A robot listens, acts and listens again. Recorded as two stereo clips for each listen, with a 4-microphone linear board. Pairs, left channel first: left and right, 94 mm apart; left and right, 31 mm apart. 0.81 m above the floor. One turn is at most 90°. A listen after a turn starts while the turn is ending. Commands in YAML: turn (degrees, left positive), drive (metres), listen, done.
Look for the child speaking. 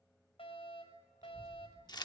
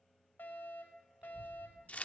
turn: -40
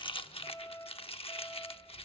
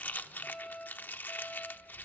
turn: -90
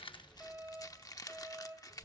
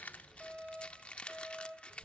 turn: -75
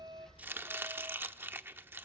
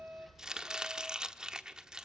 listen: true
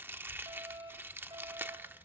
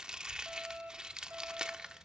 turn: -20
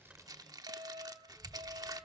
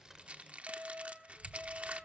done: "Facing the child speaking."